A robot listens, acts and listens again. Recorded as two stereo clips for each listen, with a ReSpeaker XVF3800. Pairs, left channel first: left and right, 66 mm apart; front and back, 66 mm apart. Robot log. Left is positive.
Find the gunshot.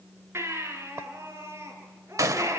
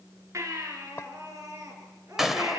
note: The gunshot: 95° right.
cmd yaw -95
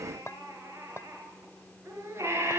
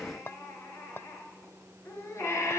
end: I heard a gunshot from this way, but can't make it out now.